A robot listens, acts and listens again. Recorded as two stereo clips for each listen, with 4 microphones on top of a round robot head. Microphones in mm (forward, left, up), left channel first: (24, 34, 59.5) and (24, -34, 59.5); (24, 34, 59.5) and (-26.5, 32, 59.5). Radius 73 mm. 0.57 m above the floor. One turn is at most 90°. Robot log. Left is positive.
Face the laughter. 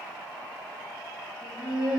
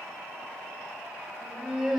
note: The laughter: 90° left.
cmd yaw +90
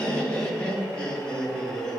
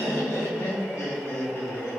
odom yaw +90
note: The laughter is now 15° left.
cmd yaw +15
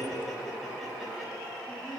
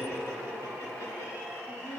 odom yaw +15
end: Facing the laughter, over 4 m away.